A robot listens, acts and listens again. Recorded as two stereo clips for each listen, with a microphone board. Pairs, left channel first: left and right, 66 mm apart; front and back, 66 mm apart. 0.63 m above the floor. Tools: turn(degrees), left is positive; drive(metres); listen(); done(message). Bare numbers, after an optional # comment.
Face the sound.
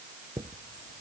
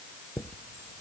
# The chime: 80° right.
turn(-80)
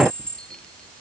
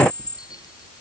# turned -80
# The chime is now 10° left.
turn(10)
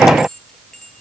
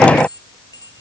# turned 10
done("Found it: a chime, straight ahead.")